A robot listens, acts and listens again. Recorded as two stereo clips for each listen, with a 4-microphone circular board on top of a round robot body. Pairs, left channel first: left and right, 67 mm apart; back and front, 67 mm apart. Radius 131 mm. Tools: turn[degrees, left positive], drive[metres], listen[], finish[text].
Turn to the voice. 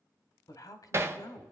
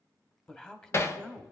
Thought: The man speaking: 105° left.
Action: turn[105]
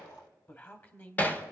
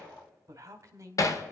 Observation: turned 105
Thought: The man speaking is now 30° left.
Action: turn[30]
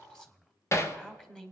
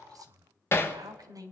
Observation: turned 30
Thought: The man speaking is now 10° left.
Action: turn[10]
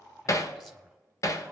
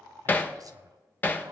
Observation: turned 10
Action: listen[]
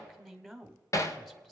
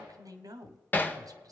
Action: finish[Found it: a man speaking, straight ahead, 1 to 2 m away.]